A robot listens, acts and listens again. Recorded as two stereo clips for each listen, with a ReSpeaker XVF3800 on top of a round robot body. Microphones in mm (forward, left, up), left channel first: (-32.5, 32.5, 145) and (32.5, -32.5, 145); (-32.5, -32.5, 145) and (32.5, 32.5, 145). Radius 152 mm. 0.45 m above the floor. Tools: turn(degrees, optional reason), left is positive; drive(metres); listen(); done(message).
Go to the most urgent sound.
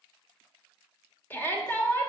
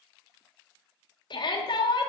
turn(degrees=-160, reason="The shout: 160° right.")
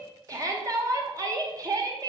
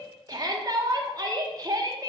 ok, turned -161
drive(metres=1.0)
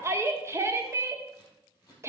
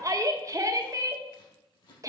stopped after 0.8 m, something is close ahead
done("I am next to the shout.")